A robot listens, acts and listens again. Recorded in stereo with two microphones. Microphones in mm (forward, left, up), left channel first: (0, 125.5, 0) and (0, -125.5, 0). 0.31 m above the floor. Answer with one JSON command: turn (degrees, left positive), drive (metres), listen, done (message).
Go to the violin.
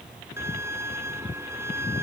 {"turn": -30}
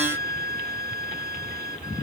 {"turn": -140}
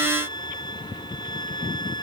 {"turn": 20}
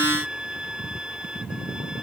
{"drive": 1.0}
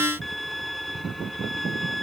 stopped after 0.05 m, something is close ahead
{"done": "Something is in my way. I am facing the violin but have not reached it."}